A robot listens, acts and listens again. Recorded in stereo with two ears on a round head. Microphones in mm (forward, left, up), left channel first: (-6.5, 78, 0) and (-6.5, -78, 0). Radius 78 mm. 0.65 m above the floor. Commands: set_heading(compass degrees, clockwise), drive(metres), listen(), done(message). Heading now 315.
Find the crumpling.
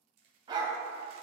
set_heading(15)
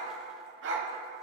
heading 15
listen()
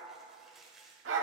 done("Facing the crumpling, 1 to 2 m away.")